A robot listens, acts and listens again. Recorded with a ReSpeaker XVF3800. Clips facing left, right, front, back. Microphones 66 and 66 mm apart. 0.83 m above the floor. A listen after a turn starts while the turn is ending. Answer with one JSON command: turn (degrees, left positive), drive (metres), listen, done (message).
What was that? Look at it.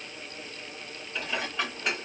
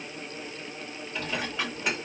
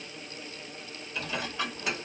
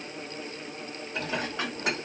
{"turn": 180}
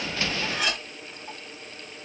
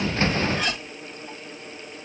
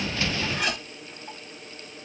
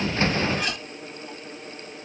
{"turn": 15}
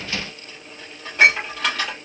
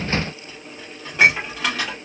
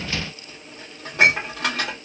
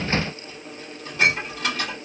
{"done": "Found it: dishes clattering, straight ahead, 1 to 2 m away."}